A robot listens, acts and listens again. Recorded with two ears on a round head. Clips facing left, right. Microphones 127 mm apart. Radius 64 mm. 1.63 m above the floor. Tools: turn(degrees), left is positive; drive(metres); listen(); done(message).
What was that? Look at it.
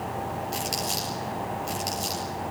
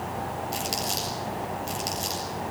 turn(degrees=30)
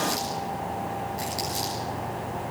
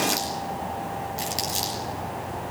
turn(degrees=-25)
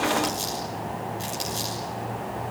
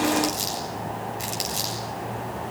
turn(degrees=-15)
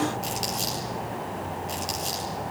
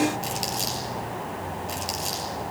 done("Facing the crumpling, over 4 m away.")